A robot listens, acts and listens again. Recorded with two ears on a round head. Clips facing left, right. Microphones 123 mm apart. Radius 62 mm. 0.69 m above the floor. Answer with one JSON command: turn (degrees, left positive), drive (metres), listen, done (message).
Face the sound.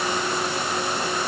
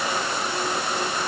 {"listen": true}
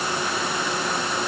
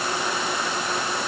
{"listen": true}
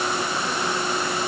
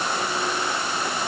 {"done": "I can't make out anything."}